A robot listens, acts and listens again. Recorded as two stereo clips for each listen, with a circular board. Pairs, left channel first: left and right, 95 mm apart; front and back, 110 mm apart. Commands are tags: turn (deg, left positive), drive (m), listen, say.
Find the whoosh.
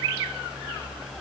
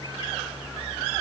<listen/>
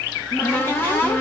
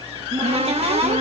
<listen/>
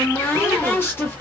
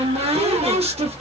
<say>I can't make out a whoosh to turn to.</say>